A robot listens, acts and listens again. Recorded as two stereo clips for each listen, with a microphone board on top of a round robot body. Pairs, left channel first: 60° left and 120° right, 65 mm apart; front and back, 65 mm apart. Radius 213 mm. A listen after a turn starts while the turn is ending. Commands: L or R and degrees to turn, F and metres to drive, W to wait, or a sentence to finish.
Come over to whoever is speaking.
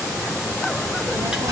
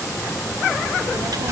R140
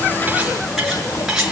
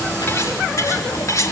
W
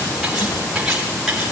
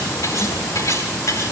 W
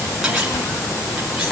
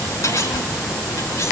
L20
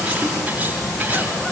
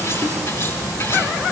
F1.0
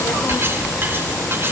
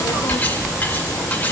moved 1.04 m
F1.0
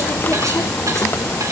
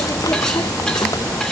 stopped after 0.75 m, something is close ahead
I am next to the child speaking.